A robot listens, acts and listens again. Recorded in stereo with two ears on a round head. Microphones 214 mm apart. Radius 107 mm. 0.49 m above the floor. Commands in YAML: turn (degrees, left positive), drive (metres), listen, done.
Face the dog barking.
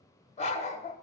turn: 30
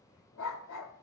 turn: 120
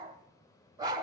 turn: -15
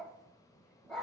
done: "Found it: a dog barking, straight ahead, 1 to 2 m away."